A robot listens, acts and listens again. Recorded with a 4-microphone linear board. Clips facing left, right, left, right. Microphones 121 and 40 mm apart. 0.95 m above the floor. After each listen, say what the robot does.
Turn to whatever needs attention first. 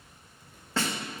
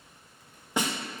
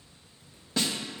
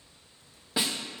Keep listening.
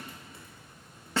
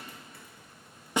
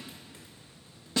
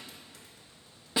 Keep listening.
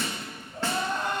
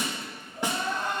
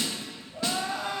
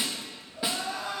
Turn 65° left.
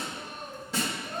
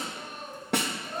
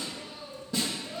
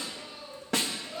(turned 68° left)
Facing the crying.